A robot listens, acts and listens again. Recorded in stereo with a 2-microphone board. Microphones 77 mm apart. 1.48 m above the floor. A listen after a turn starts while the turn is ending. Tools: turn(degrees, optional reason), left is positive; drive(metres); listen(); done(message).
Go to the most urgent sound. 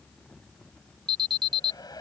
turn(degrees=-90)
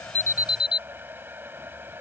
turn(degrees=-10, reason="So it is at 10° right.")
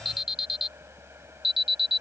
drive(metres=1.0)
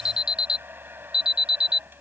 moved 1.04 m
turn(degrees=-10, reason="The alarm is now 10° right.")
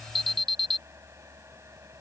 drive(metres=1.0)
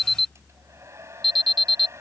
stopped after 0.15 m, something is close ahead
done("Blocked. The alarm is further on, straight ahead.")